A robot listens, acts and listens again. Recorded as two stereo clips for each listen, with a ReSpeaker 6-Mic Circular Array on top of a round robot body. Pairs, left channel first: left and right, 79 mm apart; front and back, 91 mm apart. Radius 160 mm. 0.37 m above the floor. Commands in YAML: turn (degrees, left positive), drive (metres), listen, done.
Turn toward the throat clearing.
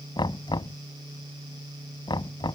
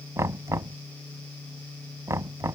listen: true
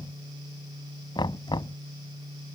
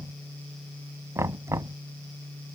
listen: true
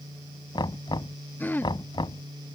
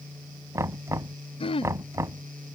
turn: 20
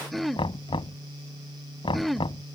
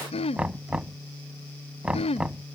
done: "Facing the throat clearing."